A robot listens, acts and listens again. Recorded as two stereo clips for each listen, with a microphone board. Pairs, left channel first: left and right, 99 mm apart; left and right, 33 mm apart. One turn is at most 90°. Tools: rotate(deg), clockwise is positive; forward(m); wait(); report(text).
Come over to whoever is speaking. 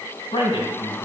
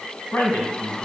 rotate(-60)
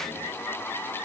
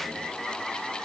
wait()
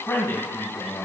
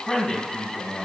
rotate(-30)
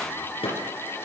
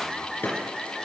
wait()
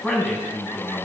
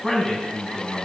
forward(1.0)
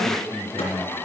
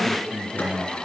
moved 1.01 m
forward(1.0)
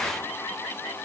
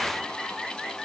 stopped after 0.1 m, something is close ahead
wait()
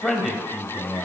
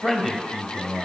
report("I am next to the man speaking.")